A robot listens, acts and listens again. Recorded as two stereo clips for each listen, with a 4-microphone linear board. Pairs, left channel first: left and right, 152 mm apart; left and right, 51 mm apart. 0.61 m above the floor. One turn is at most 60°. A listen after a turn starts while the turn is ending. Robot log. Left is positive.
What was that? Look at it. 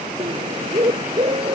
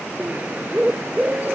note: The bird: about 35° right or 145° right.
cmd yaw -35
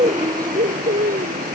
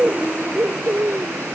note: So it is at 105° right.
cmd yaw -60
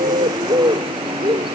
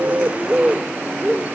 note: The bird is now 35° right.
cmd yaw -35
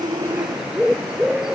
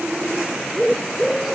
end: Facing the bird.